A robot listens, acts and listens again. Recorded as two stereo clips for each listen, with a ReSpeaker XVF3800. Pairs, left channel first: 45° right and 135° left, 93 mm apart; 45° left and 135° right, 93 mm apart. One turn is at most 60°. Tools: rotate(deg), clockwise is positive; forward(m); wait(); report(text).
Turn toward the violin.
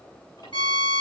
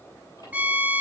rotate(60)
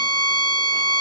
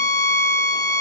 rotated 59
report("Facing the violin.")